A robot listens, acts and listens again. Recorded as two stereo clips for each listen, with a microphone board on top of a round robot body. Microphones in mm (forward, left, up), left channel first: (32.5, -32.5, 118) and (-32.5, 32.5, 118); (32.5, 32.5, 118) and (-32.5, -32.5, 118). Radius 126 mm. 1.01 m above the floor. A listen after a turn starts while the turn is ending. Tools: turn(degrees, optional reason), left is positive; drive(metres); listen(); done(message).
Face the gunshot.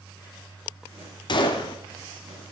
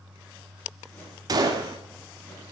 turn(degrees=-85, reason="The gunshot: 85° right.")
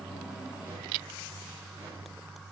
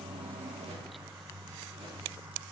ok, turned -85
done("Facing where the gunshot came from. I can't hear it now.")